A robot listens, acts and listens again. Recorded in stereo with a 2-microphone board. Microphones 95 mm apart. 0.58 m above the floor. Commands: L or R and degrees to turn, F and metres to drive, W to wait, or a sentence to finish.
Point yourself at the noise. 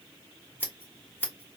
L20
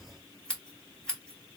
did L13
L10
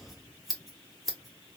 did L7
Facing the scissors.